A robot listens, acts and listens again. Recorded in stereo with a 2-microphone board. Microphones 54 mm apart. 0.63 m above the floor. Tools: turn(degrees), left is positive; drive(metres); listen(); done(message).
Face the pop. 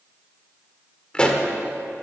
turn(degrees=20)
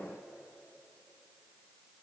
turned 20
listen()
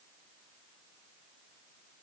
done("I heard a pop, but can't make it out now. It was about straight ahead or 140° left.")